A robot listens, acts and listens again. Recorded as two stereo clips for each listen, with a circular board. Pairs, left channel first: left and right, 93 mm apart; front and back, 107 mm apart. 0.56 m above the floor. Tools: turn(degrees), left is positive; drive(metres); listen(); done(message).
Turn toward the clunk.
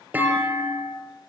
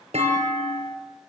turn(degrees=-165)
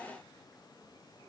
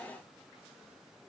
done("Facing where the clunk came from. I can't hear it now.")